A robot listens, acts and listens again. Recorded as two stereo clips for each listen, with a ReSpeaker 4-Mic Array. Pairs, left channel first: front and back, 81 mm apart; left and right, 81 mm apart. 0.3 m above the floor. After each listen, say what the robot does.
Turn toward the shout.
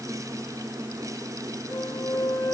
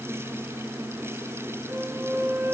Keep listening.
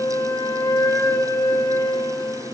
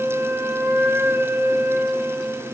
Keep listening.
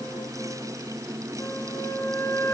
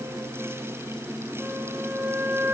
I can't make out a shout to turn to.